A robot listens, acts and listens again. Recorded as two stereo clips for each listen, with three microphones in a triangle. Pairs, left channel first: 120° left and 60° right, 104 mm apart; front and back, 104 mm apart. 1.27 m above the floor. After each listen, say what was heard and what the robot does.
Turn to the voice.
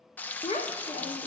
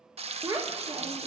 The child speaking: 130° left. Turn 130° left.
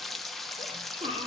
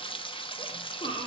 The child speaking is now 35° right. Turn 35° right.
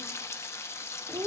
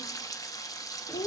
The child speaking is now 10° right. Turn 10° right.
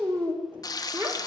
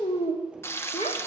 Facing the child speaking, 2 to 4 m away.